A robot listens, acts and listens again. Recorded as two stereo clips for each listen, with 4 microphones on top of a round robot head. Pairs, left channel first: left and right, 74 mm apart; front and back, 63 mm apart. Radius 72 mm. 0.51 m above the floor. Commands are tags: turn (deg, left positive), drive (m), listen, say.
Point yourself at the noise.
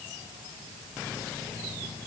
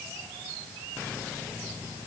<listen/>
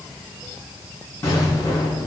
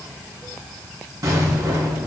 <turn deg="150"/>
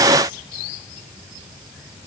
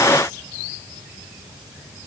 <say>Facing where the explosion came from. I can't hear it now.</say>